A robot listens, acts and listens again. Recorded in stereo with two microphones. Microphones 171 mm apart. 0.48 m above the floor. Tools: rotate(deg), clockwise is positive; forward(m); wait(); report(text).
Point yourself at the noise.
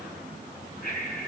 rotate(-55)
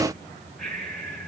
report("Found it: breathing, straight ahead, 2 to 4 m away.")